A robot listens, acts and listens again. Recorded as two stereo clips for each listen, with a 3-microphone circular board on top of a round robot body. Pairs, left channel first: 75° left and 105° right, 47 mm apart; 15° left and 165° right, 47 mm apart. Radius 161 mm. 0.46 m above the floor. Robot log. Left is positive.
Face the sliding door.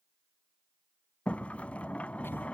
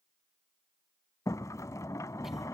note: The sliding door: 10° left.
cmd yaw +10
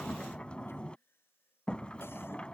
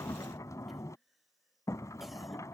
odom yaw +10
end: Facing the sliding door.